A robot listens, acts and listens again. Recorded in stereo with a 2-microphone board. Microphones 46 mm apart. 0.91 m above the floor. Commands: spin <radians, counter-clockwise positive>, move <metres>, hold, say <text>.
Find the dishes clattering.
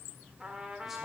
hold
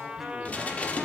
spin 0.52
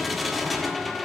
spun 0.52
say Facing the dishes clattering.